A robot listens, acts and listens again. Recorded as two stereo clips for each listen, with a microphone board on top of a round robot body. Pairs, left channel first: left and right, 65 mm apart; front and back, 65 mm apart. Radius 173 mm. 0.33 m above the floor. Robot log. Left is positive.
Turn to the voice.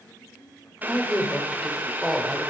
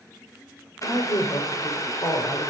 end: Found it: a woman speaking, straight ahead, 2 to 4 m away.